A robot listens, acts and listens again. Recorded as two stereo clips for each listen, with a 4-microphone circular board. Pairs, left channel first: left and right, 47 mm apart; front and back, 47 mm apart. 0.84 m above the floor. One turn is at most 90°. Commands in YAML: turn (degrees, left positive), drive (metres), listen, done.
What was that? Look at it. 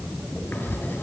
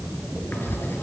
turn: 40
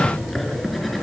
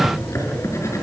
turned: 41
done: "Found it: writing, straight ahead."